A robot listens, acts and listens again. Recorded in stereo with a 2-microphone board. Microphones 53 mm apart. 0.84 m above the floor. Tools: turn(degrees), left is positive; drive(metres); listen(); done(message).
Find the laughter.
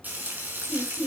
turn(degrees=30)
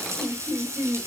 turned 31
turn(degrees=-25)
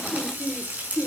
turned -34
turn(degrees=10)
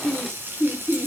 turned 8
done("Found it: laughter, straight ahead, 2 to 4 m away.")